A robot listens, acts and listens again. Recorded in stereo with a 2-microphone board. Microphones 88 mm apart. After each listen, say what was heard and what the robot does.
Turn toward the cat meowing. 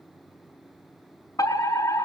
Keep listening.
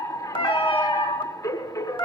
The cat meowing: about 70° left or 110° left. Turn 70° left.
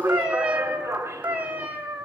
So it is at 20° right. Turn 20° right.
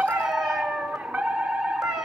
Facing the cat meowing.